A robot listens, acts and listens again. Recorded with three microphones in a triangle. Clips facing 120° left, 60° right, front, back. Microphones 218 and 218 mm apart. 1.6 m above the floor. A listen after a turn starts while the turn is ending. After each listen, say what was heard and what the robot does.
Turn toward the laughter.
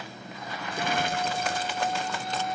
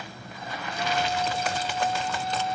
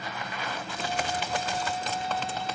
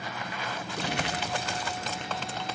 Keep listening.
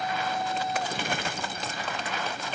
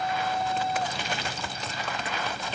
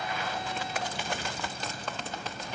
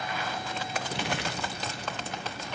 Keep listening.
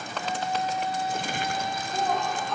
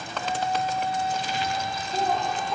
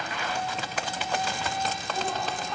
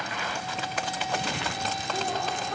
The laughter: 140° right. Turn 140° right.
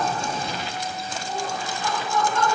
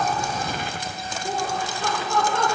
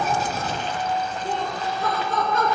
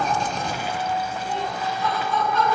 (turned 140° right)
The laughter is now 35° right. Turn 35° right.
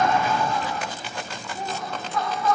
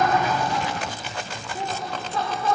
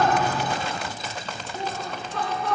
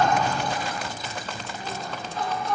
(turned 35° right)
Found it: laughter, straight ahead, over 4 m away.